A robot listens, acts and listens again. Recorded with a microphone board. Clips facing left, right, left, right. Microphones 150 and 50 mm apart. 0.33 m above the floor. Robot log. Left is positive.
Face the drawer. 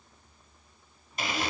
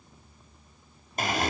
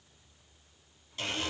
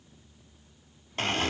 cmd idle
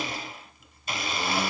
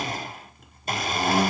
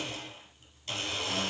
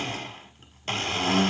cmd idle
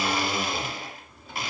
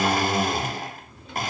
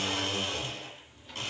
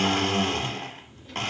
cmd yaw +30
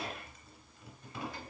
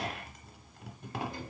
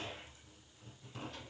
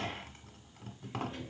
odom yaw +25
note: So it is at 20° right.
cmd yaw -20
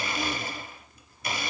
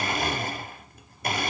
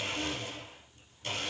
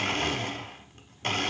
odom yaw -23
cmd idle
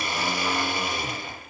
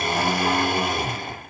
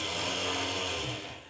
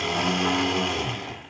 cmd idle
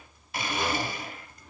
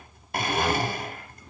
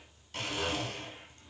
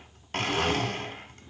end: Facing the drawer.